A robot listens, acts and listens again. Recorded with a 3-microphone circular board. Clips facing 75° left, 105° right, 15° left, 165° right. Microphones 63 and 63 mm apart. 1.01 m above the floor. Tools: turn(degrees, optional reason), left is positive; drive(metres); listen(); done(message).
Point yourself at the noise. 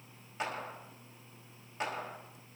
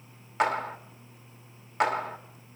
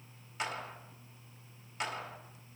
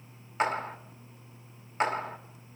turn(degrees=-120, reason="The clap: 120° right.")
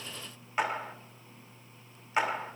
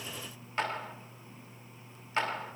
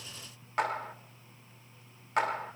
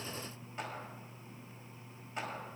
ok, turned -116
done("Found it: a clap, straight ahead, 1 to 2 m away.")